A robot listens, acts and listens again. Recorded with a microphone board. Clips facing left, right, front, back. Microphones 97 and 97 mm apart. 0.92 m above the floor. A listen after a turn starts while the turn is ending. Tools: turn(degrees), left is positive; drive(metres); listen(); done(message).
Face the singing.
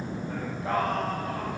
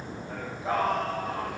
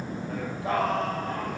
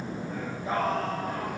done("Found it: singing, straight ahead, over 4 m away.")